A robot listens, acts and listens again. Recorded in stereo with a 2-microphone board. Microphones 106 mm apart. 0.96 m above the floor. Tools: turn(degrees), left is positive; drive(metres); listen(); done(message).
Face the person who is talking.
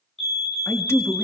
turn(degrees=25)
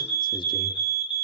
listen()
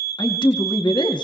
turn(degrees=130)
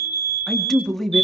done("Facing the man speaking, 2 to 4 m away.")